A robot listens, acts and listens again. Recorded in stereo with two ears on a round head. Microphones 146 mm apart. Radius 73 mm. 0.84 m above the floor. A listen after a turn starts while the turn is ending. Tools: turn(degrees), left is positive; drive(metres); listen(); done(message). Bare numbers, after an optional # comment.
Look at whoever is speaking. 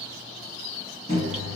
listen()
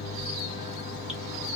listen()
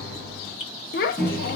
# The child speaking: about 60° left or 120° left.
turn(60)
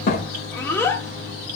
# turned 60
# So it is at 15° left.
turn(15)
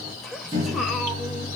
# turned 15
done("Found it: a child speaking, straight ahead.")